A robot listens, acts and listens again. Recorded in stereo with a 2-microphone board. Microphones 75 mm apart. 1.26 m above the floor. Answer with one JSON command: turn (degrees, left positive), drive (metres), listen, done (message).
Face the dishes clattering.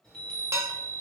{"turn": -40}
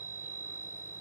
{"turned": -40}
{"listen": true}
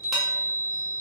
{"listen": true}
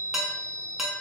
{"done": "Facing the dishes clattering."}